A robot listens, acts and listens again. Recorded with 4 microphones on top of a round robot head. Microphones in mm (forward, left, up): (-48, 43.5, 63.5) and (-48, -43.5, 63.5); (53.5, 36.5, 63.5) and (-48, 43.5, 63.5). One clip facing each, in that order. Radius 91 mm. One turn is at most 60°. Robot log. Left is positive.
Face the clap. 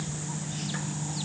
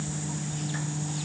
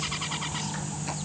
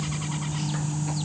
cmd idle
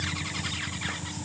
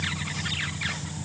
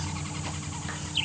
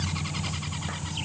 cmd idle
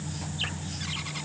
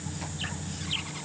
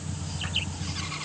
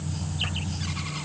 end: I can't make out a clap to turn to.